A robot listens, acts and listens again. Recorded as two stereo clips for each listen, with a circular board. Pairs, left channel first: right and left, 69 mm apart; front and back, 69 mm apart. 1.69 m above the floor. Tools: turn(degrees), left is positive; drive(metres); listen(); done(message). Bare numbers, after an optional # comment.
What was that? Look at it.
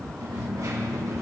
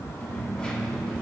# The dropped coin: 75° left.
turn(75)
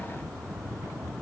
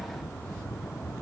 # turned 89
# Nothing new. It was at 15° right.
turn(-15)
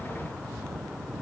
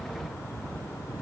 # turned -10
done("I heard a dropped coin from this way, but can't make it out now.")